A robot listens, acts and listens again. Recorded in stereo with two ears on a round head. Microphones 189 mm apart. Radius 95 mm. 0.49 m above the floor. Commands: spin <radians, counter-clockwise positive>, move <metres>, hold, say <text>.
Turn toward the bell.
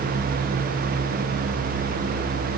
hold
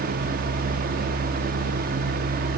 hold
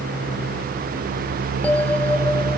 spin 0.52
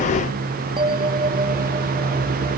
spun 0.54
spin -0.44
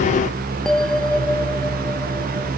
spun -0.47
say Found it: a bell, straight ahead.